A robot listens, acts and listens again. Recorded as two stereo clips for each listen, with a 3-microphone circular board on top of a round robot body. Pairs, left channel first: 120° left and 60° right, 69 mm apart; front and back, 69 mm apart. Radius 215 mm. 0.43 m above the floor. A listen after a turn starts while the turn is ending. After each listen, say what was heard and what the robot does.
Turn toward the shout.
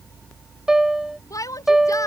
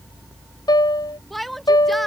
The shout: 90° left. Turn 90° left.
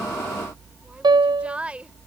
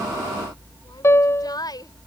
The shout is now 10° left. Turn 10° left.
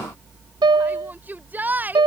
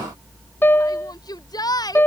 Facing the shout.